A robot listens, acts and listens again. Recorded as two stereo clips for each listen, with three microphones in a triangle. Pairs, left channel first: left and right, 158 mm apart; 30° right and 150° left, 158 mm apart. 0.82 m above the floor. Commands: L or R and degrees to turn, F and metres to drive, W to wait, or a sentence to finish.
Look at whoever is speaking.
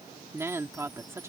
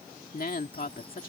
R20
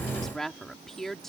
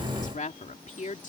Facing the woman speaking.